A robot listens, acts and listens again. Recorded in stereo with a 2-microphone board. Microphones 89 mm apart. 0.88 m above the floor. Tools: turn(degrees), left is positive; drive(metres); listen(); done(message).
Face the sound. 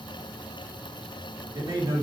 turn(degrees=-35)
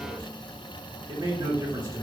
turn(degrees=-40)
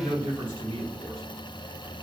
turn(degrees=-115)
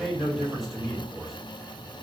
done("Facing the man speaking.")